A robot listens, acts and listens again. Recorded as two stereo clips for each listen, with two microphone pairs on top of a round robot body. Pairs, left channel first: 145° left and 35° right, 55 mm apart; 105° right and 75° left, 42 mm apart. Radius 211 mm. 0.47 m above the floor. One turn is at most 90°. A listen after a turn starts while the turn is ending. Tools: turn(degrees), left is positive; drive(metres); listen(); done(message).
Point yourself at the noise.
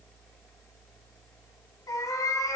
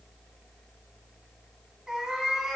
turn(degrees=90)
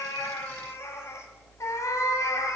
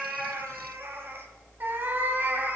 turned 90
turn(degrees=90)
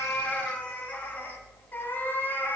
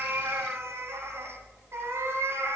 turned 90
turn(degrees=90)
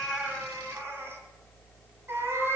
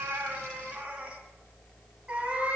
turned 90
turn(degrees=10)
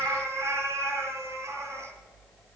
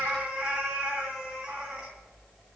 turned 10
done("Found it: a cat meowing, straight ahead.")